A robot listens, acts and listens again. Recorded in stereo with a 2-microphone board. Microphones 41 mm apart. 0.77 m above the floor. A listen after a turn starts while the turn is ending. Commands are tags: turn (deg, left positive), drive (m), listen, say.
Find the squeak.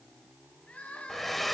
<listen/>
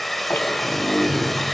<turn deg="90"/>
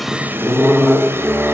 <say>Found it: a squeak, straight ahead, 2 to 4 m away.</say>